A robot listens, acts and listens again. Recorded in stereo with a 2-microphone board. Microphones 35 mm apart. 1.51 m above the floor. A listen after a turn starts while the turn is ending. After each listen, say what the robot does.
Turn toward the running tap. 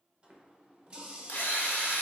Turn 25° right.
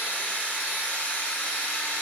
Keep listening.
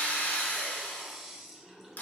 Found it: a running tap, straight ahead, under 1 m away.